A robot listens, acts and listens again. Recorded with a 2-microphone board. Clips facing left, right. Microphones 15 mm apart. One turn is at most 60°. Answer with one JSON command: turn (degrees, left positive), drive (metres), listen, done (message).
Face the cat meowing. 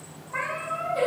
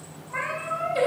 {"turn": 30}
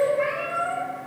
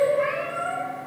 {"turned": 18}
{"turn": 25}
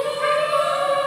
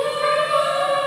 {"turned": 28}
{"listen": true}
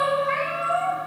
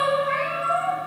{"turn": 20}
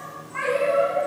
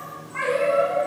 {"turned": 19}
{"turn": 30}
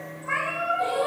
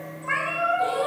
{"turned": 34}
{"turn": -40}
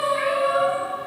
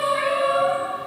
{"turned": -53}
{"turn": 15}
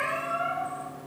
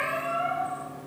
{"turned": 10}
{"turn": -10}
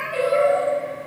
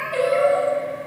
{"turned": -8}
{"done": "Facing the cat meowing."}